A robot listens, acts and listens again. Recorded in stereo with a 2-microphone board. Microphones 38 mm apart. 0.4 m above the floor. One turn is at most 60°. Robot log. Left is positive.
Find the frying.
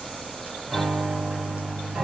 cmd idle
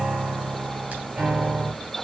cmd idle
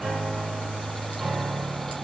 end: I can't make out frying, only a piano.